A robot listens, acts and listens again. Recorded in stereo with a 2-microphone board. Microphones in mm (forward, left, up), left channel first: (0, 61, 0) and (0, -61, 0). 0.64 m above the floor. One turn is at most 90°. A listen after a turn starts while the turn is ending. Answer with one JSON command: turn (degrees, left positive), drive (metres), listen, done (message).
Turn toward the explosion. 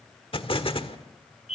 {"turn": 50}
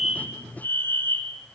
{"listen": true}
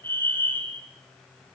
{"done": "I heard an explosion, but can't make it out now. It was about straight ahead or 80° left."}